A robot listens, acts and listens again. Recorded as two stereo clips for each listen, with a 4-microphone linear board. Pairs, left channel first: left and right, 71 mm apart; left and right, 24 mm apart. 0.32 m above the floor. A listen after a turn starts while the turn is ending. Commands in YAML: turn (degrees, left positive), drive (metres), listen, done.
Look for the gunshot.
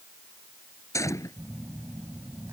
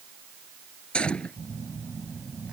turn: 50
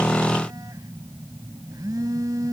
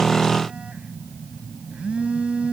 listen: true
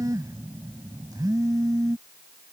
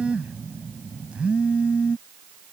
done: "I heard a gunshot, but can't make it out now. It was about straight ahead or 80° left."